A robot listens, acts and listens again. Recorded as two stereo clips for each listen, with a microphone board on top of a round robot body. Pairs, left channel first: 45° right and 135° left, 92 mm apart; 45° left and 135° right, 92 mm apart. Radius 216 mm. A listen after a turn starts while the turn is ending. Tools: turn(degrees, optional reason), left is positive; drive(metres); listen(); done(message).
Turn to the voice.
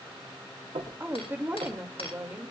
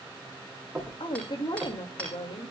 turn(degrees=70, reason="The woman speaking: 70° left.")
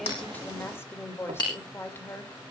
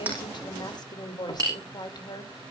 turn(degrees=15, reason="The woman speaking is now 15° left.")
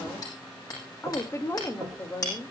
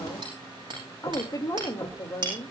done("Found it: a woman speaking, straight ahead.")